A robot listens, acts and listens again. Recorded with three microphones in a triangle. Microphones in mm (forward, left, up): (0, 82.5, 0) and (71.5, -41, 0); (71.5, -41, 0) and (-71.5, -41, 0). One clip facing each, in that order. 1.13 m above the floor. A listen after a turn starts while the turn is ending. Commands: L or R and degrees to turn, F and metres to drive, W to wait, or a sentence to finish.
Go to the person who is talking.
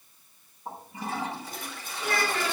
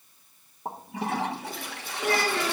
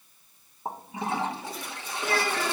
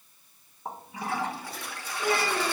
R110
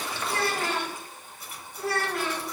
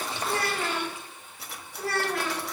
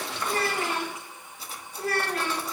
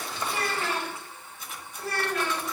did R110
L30
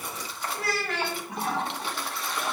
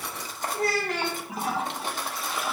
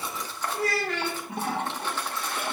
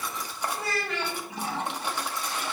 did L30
R15
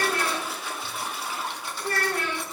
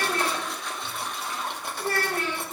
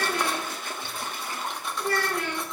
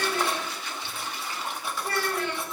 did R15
R10
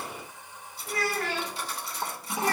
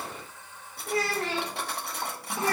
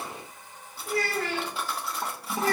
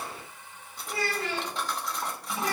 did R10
F1.0
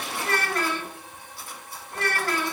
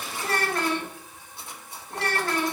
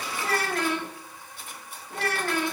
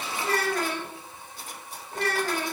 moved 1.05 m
F1.0
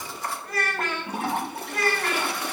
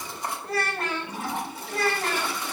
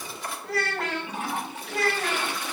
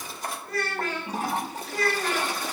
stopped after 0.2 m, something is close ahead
Arrived at the child speaking, straight ahead.